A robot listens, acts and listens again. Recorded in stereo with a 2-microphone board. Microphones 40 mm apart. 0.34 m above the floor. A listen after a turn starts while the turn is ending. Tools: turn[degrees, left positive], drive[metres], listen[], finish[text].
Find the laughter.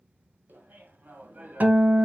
Thought: The laughter: about 45° right or 135° right.
Action: turn[-45]
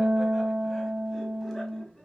Thought: So it is at 15° left.
Action: turn[15]
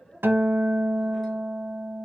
Action: finish[Found it: laughter, straight ahead, 2 to 4 m away.]